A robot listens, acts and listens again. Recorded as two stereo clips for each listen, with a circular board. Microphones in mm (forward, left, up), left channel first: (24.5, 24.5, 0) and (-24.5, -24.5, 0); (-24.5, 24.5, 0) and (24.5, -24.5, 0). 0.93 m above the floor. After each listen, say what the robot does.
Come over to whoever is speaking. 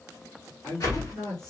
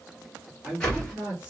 Turn 25° left.
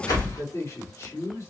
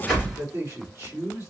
Drive 1.0 m forward.
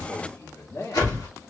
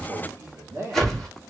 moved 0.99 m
Drive 1.0 m forward.
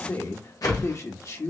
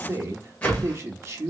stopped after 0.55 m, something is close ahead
Arrived at the man speaking, straight ahead.